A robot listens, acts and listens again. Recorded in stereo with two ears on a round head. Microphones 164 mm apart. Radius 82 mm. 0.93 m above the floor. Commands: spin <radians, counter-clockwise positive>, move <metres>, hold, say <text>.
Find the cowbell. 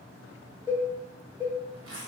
spin -0.52
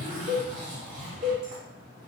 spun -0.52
spin -2.36
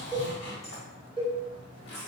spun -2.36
spin 0.44
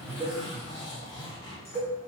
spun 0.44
spin 0.17
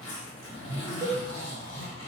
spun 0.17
say Facing the cowbell, 1 to 2 m away.